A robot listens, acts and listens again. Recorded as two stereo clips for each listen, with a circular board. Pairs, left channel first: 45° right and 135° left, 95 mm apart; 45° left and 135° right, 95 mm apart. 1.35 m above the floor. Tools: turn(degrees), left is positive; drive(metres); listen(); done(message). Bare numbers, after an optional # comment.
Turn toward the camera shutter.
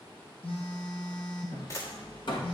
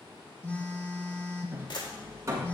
# The camera shutter: 10° left.
turn(10)
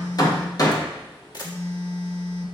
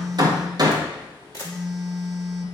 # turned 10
done("Found it: a camera shutter, straight ahead, 1 to 2 m away.")